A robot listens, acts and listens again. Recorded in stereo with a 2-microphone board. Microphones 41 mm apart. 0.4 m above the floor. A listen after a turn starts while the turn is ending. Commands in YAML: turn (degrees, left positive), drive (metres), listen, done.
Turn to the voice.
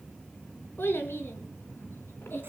turn: 75
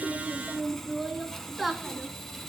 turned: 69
done: "Facing the child speaking."